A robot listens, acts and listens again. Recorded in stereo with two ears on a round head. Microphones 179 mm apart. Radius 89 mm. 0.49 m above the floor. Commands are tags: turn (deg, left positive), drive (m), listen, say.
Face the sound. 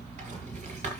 <turn deg="-35"/>
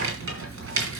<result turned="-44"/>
<turn deg="-95"/>
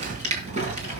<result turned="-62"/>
<turn deg="-35"/>
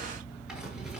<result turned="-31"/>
<say>Facing the rattle.</say>